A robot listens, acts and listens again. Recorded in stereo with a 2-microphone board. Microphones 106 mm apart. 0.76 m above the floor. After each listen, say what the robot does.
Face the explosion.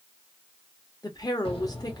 Turn 70° left.
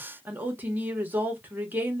Keep listening.
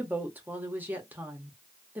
I heard an explosion, but can't make it out now. It was about straight ahead or 40° left.